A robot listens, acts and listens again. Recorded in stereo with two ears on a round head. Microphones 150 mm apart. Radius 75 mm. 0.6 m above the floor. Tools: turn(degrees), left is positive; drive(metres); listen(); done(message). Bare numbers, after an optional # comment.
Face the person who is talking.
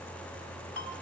listen()
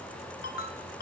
listen()
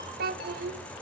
# The child speaking: about 60° right or 120° right.
turn(-60)
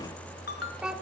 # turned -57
done("Facing the child speaking, 1 to 2 m away.")